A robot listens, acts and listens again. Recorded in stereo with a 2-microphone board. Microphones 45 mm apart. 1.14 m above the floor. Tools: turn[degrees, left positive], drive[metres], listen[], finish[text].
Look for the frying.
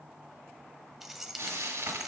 Action: turn[-90]
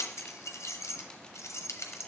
Action: listen[]
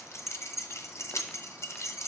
Action: listen[]
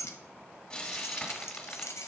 Thought: The frying is now 15° left.
Action: turn[15]
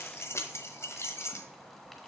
Action: listen[]
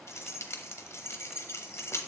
Action: listen[]
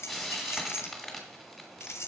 Action: finish[Found it: frying, straight ahead.]